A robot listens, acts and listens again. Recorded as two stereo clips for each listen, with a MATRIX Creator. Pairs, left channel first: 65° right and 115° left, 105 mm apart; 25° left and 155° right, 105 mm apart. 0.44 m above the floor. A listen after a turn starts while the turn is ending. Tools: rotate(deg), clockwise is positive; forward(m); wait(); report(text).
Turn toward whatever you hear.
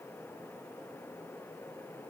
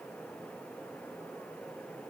wait()
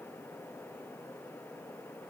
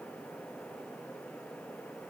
wait()
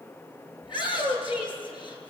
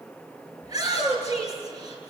rotate(105)
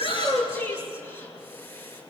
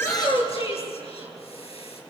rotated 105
report("Found it: a shout, straight ahead, over 4 m away.")